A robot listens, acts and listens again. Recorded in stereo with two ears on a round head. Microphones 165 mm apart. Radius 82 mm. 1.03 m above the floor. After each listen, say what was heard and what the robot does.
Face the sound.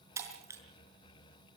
The breaking glass: about 15° right or 165° right. Turn 15° right.
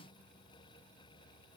Keep listening.
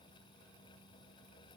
I heard breaking glass, but can't make it out now. It was about straight ahead or 150° right.